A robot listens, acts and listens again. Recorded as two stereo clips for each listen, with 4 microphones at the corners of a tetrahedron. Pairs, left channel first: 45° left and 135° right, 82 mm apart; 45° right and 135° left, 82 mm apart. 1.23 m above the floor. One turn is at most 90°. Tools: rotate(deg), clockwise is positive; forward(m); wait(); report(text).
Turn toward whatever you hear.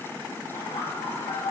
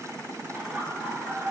rotate(-55)
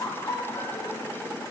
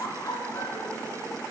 report("Facing the laughter, 2 to 4 m away.")